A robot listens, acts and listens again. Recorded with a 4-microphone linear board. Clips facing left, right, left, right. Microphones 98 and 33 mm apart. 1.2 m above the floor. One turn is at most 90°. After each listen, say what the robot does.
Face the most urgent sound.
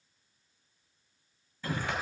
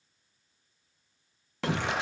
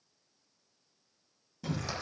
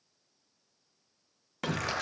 Turn 90° right.
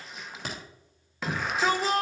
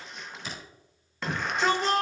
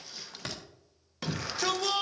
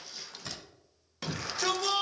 Found it: a shout, straight ahead, 1 to 2 m away.